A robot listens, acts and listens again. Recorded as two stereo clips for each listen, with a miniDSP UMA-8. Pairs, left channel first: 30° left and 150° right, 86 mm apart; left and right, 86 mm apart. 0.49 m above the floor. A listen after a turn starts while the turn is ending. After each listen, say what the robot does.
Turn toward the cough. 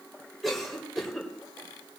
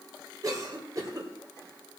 Turn 55° right.
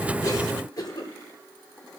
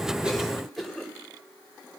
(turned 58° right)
Facing the cough, 2 to 4 m away.